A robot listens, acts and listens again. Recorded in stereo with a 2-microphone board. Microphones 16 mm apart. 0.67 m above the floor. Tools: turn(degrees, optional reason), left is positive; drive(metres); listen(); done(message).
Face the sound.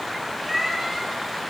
turn(degrees=-30)
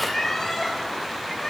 turn(degrees=35, reason="So it is at 35° left.")
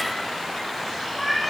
turn(degrees=10, reason="The cat meowing is now 10° left.")
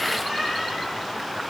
listen()
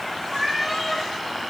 done("Facing the cat meowing, over 4 m away.")